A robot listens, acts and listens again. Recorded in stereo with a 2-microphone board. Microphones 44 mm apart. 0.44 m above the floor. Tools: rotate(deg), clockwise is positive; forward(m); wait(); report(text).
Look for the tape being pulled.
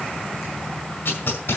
rotate(-55)
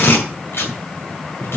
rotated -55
rotate(-70)
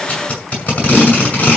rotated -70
rotate(-35)
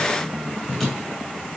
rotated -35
report("Facing the tape being pulled.")